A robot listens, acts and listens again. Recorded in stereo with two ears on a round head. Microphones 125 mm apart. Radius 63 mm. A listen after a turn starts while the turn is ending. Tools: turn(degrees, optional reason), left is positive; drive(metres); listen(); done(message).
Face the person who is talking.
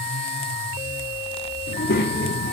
turn(degrees=90)
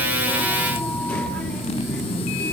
turn(degrees=10, reason="So it is at 10° left.")
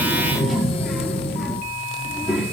done("Facing the child speaking, 1 to 2 m away.")